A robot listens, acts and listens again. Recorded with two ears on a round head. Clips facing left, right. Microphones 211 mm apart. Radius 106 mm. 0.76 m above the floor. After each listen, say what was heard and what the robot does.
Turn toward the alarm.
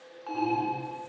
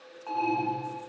The alarm: about 30° left or 150° left. Turn 30° left.
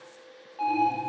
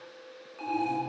Found it: an alarm, straight ahead.